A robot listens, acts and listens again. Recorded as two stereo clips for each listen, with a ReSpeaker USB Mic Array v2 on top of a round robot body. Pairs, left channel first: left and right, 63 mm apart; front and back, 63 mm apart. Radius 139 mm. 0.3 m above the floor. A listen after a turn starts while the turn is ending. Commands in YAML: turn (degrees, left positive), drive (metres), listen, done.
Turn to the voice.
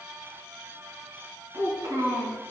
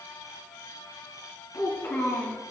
turn: -50
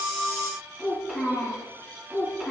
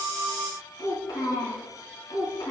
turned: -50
turn: -10
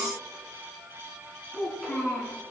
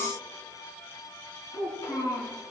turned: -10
done: "Found it: a child speaking, straight ahead, over 4 m away."